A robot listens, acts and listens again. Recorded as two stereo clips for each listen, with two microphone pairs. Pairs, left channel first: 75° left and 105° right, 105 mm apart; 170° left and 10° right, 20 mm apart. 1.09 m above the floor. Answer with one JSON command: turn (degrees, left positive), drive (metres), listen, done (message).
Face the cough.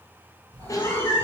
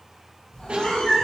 {"turn": 20}
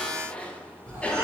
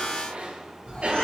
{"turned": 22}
{"done": "Facing the cough, under 1 m away."}